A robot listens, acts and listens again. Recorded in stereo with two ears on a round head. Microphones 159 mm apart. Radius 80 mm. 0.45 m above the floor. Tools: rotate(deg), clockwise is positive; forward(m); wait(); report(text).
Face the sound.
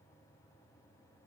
wait()
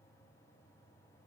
wait()
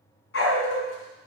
rotate(-90)
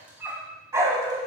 rotate(20)
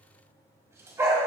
rotate(15)
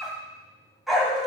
report("Facing the dog barking.")